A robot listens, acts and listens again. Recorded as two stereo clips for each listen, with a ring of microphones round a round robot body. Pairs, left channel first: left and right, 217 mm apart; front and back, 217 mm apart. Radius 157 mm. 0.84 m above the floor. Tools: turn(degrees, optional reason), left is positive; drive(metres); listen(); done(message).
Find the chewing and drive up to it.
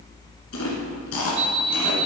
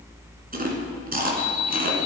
turn(degrees=135, reason="The chewing: 135° left.")
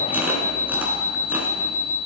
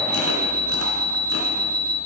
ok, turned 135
listen()
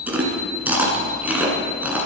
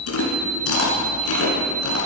drive(metres=1.0)
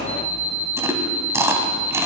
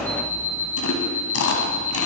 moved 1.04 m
turn(degrees=-15, reason="The chewing is now 15° right.")
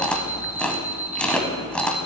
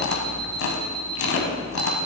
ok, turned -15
drive(metres=1.0)
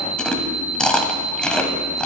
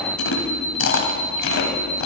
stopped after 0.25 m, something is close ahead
done("I am next to the chewing.")